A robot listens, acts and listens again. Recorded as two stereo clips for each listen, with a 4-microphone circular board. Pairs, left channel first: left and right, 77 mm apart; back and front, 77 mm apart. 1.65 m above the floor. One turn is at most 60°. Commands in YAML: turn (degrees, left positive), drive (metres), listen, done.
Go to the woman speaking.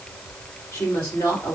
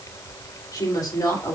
turn: 60
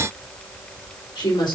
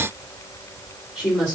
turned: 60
turn: 60
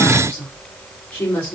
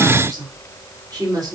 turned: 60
turn: 40
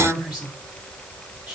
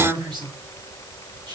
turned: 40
drive: 1.0
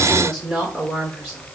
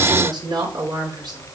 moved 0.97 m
drive: 1.0
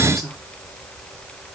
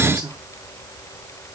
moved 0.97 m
drive: 1.0
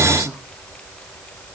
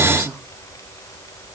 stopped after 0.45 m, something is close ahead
listen: true
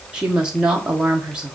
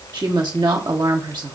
turn: -15
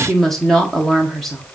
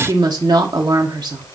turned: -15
done: "Arrived at the woman speaking, straight ahead."